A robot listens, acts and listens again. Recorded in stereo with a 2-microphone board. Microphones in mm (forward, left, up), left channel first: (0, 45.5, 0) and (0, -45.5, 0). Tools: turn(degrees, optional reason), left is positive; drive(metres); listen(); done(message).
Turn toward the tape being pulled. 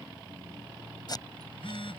turn(degrees=45, reason="The tape being pulled: about 45° left or 135° left.")
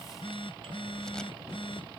listen()
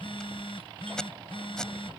done("Found it: tape being pulled, straight ahead.")